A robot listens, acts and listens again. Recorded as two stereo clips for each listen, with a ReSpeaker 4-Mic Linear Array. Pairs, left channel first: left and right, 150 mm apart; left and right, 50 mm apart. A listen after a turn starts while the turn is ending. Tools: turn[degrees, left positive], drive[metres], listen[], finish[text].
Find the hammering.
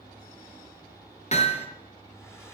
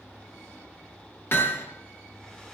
Thought: The hammering: about 45° left or 135° left.
Action: turn[45]
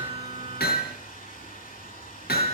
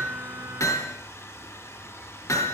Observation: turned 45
Thought: So it is at 90° left.
Action: turn[90]
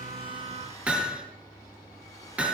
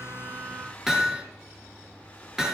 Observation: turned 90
Thought: The hammering is now 10° right.
Action: turn[-10]
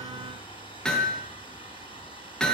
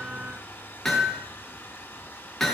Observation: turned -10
Action: finish[Found it: hammering, straight ahead, over 4 m away.]